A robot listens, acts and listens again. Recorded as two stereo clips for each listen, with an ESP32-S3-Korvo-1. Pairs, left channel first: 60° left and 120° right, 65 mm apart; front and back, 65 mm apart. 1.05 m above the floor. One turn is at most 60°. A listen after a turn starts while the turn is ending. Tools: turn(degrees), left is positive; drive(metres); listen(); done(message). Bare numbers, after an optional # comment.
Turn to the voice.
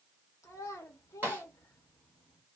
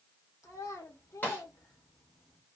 # The child speaking: 30° left.
turn(30)
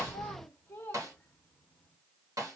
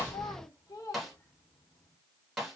done("Facing the child speaking, under 1 m away.")